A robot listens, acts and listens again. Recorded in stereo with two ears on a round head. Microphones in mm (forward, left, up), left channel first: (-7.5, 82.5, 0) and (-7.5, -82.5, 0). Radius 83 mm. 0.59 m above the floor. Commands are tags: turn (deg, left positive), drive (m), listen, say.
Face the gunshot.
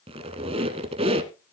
<listen/>
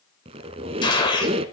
<turn deg="25"/>
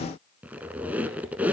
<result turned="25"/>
<listen/>
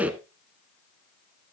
<say>I heard a gunshot, but can't make it out now. It was about straight ahead or 130° left.</say>